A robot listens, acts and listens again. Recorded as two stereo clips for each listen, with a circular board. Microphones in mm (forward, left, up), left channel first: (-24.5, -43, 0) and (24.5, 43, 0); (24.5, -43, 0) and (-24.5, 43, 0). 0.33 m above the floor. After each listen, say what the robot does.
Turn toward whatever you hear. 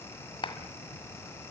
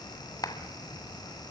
Turn 105° right.
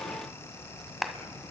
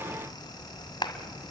Turn 30° right.
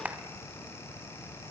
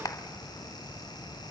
Turn 10° right.
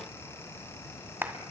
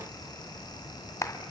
Facing the clap.